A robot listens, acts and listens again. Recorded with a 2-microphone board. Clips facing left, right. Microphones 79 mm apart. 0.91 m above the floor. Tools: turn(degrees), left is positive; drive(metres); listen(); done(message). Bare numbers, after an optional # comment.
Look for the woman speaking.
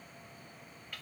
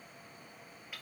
listen()
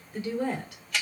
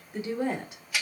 # The woman speaking: about 20° right or 160° right.
turn(-20)
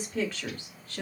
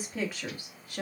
# The woman speaking: about 15° right or 165° right.
turn(-15)
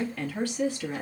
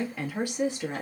# The woman speaking: about 25° right or 155° right.
turn(-25)
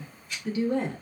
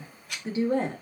# The woman speaking: about 40° right or 140° right.
turn(-40)
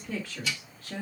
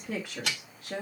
# The woman speaking: about 25° right or 155° right.
turn(-25)
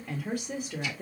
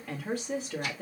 done("Facing the woman speaking.")